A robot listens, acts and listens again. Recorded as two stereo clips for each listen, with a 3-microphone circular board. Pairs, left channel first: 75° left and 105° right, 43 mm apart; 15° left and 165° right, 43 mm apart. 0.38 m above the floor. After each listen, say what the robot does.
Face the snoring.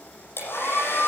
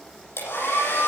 Keep listening.
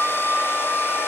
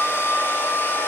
Keep listening.
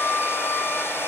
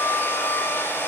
I can't make out snoring to turn to.